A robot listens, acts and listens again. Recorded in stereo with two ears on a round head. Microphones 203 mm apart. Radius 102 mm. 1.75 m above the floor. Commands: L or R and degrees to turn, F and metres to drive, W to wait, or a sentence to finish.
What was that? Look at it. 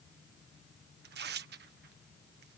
R50
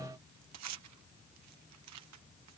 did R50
R80
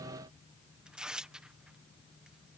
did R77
Facing the tearing paper.